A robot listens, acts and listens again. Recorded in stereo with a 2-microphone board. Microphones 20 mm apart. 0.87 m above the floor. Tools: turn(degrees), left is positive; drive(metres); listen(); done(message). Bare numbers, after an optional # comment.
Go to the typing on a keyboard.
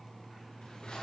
listen()
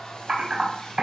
# The typing on a keyboard: about 55° right or 125° right.
turn(-55)
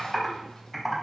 drive(1.0)
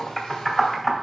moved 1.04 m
drive(1.0)
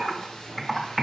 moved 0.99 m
drive(1.0)
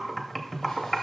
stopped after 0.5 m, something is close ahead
done("Arrived at the typing on a keyboard, straight ahead.")